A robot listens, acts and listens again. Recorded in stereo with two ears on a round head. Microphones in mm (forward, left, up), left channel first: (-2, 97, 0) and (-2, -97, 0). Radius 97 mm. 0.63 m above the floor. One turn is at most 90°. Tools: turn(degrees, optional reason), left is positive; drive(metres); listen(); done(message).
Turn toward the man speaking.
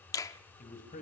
turn(degrees=35, reason="The man speaking: about 35° left or 145° left.")
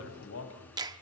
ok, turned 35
turn(degrees=90, reason="So it is at 115° left.")
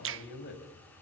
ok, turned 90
turn(degrees=50, reason="The man speaking is now 50° left.")
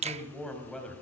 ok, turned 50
done("Facing the man speaking.")